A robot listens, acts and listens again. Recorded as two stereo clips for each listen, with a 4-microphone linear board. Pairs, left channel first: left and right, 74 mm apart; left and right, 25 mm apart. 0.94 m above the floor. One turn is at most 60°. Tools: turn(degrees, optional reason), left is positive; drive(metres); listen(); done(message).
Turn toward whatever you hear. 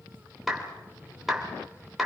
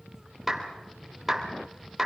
turn(degrees=30)
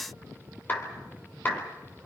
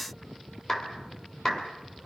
turn(degrees=60, reason="So it is at 155° left.")
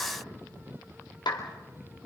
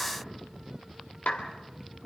turn(degrees=60, reason="The clap is now 80° left.")
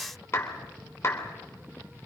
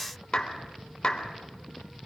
turn(degrees=35, reason="The clap is now 35° left.")
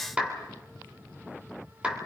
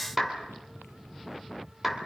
turn(degrees=-15, reason="The clap is now 15° right.")
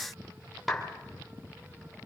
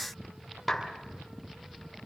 done("Found it: a clap, straight ahead.")